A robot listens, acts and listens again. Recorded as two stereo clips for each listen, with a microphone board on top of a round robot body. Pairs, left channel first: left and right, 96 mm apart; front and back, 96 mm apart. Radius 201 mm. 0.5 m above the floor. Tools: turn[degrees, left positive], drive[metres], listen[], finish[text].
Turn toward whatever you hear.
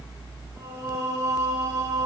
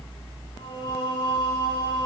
Thought: The singing: 40° right.
Action: turn[-40]
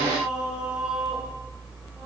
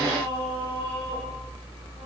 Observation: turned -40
Thought: The singing is now 15° right.
Action: turn[-15]
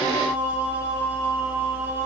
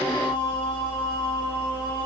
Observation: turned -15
Thought: The singing is now 25° right.
Action: turn[-25]
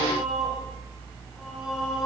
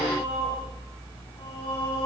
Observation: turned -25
Action: finish[Facing the singing, over 4 m away.]